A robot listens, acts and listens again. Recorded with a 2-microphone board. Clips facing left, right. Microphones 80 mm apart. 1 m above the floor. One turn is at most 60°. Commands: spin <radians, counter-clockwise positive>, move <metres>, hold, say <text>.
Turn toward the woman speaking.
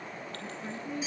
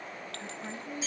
spin -0.61
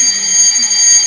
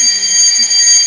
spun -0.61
hold
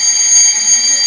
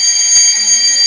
hold
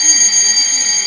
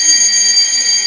say I heard a woman speaking, but can't make it out now. It was about straight ahead or 110° right.